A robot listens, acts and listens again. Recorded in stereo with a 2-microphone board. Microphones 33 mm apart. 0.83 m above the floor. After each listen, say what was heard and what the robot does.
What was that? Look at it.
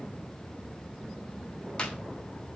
The clap: about 30° left or 150° left. Turn 30° left.
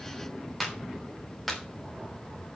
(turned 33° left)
Facing the clap.